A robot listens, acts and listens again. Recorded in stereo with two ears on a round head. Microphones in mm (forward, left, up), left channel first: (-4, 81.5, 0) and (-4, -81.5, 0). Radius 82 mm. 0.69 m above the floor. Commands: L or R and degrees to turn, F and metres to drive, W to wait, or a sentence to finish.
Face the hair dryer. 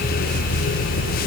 W
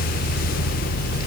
W
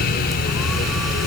I can't make out a hair dryer.